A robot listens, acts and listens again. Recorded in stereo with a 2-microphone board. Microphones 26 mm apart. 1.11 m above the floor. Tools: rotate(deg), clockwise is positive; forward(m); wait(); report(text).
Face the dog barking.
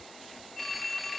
wait()
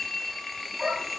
rotate(30)
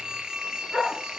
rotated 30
report("Found it: a dog barking, straight ahead.")